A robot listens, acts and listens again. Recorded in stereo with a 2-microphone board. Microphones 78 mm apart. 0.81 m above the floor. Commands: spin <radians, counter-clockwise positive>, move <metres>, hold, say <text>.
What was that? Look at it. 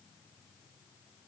hold
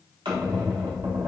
spin -1.57
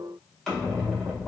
say Facing the squeak.